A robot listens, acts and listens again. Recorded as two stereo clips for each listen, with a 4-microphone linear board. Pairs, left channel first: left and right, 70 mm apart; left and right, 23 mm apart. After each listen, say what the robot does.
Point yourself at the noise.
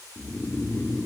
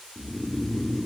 Turn 25° left.
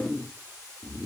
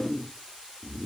Found it: snoring, straight ahead.